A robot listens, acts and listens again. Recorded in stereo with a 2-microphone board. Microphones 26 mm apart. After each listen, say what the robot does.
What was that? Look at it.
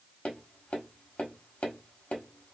Turn 70° left.
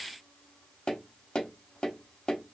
Turn 35° left.
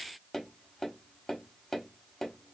Turn 10° left.
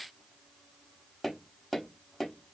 Found it: tapping, straight ahead.